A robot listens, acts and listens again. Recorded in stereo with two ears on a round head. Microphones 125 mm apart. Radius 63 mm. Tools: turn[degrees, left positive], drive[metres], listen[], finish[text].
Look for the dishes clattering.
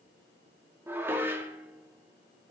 Action: turn[-30]
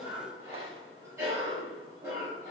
Action: listen[]
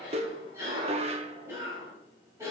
Thought: So it is at 135° right.
Action: turn[-135]
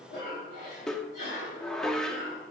Action: finish[Found it: dishes clattering, straight ahead.]